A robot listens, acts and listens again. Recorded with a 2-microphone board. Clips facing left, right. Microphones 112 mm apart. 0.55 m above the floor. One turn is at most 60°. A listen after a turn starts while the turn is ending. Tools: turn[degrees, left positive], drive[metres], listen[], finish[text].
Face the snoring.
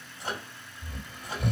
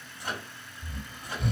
Thought: The snoring: about 60° left or 120° left.
Action: turn[60]
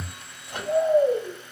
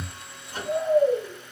Thought: So it is at 30° left.
Action: turn[30]
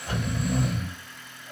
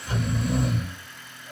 Action: finish[Found it: snoring, straight ahead, 1 to 2 m away.]